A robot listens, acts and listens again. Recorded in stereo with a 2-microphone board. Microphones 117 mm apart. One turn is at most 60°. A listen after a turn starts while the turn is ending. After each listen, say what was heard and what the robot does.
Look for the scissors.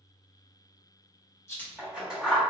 Turn 30° right.
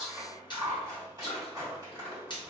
So it is at 145° right. Turn 60° right.
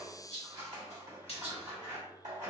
The scissors is now 85° right. Turn 60° right.
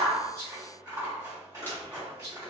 The scissors is now 35° right. Turn 35° right.
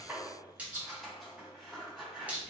Facing the scissors.